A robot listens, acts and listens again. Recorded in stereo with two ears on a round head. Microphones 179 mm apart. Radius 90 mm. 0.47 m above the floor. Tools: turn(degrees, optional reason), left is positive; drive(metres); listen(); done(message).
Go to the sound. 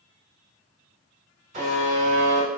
turn(degrees=-40, reason="The buzzer: about 40° right or 140° right.")
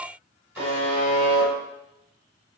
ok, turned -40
turn(degrees=-10, reason="So it is at 10° right.")
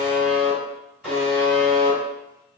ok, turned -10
drive(metres=1.0)
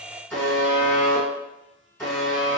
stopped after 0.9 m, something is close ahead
done("Arrived at the buzzer, straight ahead.")